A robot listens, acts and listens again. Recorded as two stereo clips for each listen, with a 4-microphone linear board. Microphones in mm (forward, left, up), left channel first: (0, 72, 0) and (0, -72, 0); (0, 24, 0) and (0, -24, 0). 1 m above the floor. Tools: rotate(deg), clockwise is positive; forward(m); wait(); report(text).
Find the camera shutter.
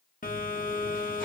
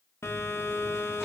wait()
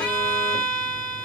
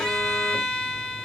wait()
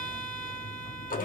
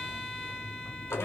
report("I can't make out a camera shutter to turn to.")